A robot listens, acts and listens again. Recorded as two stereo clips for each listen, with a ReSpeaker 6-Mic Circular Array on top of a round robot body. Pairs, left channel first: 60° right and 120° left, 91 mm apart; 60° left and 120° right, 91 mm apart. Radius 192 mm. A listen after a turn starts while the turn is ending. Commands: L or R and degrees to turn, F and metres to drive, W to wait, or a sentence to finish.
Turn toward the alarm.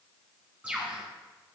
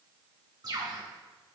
W
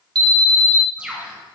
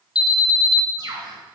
L95
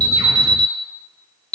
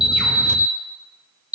L25
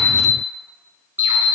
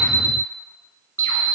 Facing the alarm, 2 to 4 m away.